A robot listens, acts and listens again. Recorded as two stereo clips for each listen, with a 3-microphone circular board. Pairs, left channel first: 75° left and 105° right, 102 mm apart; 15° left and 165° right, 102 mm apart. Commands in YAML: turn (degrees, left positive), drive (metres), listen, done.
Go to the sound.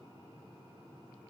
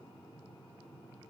listen: true
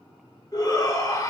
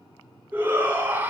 turn: 125
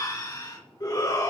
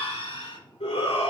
turn: 25
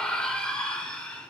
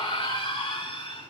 drive: 1.0
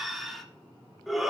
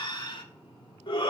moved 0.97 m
turn: -15
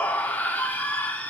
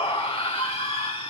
drive: 1.0
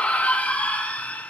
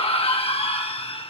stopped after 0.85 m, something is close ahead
done: "I am next to the shout."